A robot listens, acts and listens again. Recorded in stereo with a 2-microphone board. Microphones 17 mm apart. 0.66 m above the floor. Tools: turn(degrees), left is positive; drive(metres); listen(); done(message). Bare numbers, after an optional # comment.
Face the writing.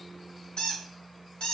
listen()
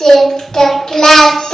listen()
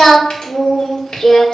done("I can't make out writing to turn to.")